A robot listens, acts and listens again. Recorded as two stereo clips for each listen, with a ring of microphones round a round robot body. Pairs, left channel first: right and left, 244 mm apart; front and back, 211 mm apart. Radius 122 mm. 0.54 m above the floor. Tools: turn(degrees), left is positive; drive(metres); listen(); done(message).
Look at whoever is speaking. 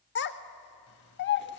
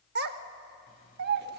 turn(degrees=-135)
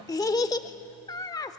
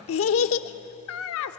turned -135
turn(degrees=-15)
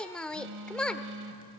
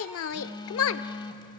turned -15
done("Found it: a child speaking, straight ahead.")